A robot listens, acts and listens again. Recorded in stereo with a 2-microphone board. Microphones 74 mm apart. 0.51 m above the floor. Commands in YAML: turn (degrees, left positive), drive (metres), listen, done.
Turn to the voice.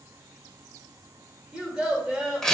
turn: -30
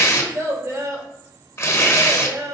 turn: -135
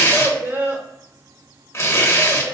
turn: -35
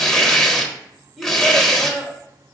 done: "Found it: a child speaking, straight ahead, 1 to 2 m away."